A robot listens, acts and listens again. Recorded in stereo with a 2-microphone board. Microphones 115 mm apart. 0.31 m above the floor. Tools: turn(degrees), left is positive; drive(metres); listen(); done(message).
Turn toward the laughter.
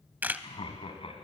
turn(degrees=55)
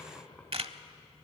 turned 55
turn(degrees=15)
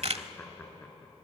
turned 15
turn(degrees=15)
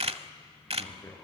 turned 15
turn(degrees=10)
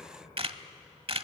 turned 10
done("Facing the laughter, over 4 m away.")